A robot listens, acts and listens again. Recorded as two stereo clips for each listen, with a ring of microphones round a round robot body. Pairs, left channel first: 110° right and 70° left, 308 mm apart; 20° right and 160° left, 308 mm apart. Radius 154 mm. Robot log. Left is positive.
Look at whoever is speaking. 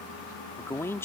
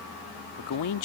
note: The man speaking: 30° right.
cmd yaw -30
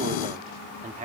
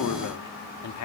end: Facing the man speaking.